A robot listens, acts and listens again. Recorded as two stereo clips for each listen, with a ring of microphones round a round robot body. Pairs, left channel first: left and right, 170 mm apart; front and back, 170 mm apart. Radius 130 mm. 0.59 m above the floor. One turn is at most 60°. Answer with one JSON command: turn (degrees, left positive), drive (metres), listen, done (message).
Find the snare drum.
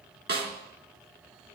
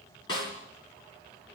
{"turn": -60}
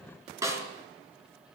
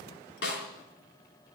{"turn": -20}
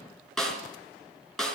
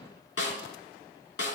{"done": "Facing the snare drum."}